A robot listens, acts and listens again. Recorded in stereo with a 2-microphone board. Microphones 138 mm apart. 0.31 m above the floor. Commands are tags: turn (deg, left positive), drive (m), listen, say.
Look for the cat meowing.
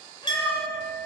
<turn deg="35"/>
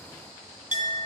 <listen/>
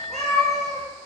<say>Facing the cat meowing.</say>